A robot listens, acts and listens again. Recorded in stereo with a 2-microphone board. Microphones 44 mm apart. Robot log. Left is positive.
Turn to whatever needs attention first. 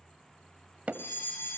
note: The fire alarm: about 60° left or 120° left.
cmd yaw +60
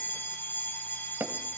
note: So it is at 55° left.
cmd yaw +55
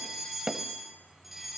end: Facing the fire alarm, over 4 m away.